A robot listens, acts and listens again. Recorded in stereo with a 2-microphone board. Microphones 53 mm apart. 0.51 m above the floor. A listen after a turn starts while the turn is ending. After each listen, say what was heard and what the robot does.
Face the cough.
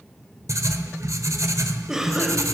Turn 30° right.
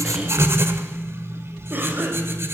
So it is at 140° right. Turn 140° right.
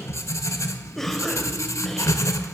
Facing the cough.